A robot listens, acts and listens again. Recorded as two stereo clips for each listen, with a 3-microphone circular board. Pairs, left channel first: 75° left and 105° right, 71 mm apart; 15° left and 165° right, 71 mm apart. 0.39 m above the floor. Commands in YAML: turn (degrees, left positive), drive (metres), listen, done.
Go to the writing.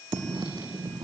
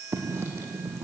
turn: -115
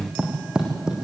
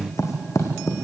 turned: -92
turn: -25
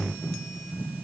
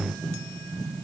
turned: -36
turn: 10
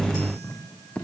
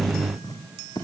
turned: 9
drive: 1.0
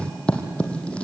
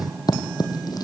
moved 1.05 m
drive: 1.0
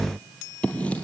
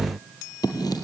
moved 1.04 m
drive: 1.0
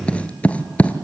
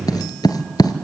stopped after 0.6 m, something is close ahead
done: "I am next to the writing."